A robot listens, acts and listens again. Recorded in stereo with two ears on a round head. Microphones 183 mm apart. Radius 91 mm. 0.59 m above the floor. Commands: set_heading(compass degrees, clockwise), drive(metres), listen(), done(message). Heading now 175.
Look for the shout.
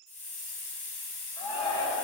set_heading(150)
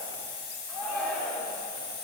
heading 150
done("Found it: a shout, straight ahead, 1 to 2 m away.")